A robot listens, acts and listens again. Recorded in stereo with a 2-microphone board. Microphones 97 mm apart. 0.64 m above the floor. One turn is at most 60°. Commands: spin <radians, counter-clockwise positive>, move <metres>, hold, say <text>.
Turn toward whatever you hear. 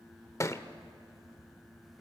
spin 0.52
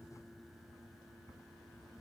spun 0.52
hold
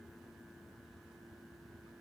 say I heard a thud, but can't make it out now. It was about straight ahead or 120° left.